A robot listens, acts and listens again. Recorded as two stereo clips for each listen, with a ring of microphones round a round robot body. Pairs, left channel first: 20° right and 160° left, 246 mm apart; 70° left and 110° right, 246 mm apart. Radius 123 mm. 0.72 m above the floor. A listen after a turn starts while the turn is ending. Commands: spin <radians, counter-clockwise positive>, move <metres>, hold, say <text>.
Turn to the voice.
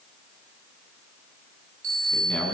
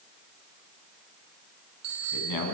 spin 1.05
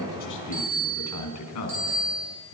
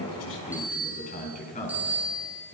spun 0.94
say Found it: a man speaking, straight ahead.